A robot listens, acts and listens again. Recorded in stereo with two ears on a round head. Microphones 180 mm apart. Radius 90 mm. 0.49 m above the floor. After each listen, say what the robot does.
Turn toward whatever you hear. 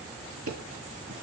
Turn 90° right.
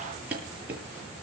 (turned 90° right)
Turn 10° right.
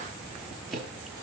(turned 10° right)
Found it: ticking, straight ahead.